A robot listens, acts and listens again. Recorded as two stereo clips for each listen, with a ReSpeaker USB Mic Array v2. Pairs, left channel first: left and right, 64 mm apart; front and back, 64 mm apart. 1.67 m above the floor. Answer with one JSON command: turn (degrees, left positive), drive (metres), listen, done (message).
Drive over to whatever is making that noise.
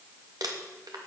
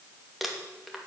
{"turn": -90}
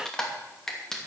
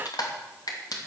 {"turn": 10}
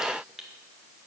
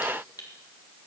{"drive": 1.0}
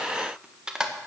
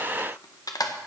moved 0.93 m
{"turn": -15}
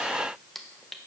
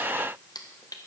{"drive": 1.0}
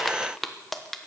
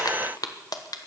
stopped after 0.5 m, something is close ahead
{"done": "I am next to the crumpling."}